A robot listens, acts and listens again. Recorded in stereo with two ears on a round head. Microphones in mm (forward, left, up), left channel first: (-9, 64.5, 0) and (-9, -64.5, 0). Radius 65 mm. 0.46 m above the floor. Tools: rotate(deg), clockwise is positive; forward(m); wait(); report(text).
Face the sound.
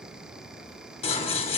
rotate(-40)
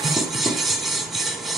report("Found it: scissors, straight ahead.")